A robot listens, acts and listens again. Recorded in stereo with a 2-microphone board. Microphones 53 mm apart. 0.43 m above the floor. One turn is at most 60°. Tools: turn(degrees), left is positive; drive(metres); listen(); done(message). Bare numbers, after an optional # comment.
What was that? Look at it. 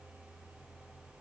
listen()
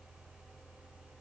listen()
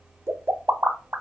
# The pop: about 70° right or 110° right.
turn(-60)
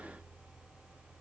listen()
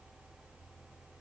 done("I heard a pop, but can't make it out now. It was about 10° right or 50° right.")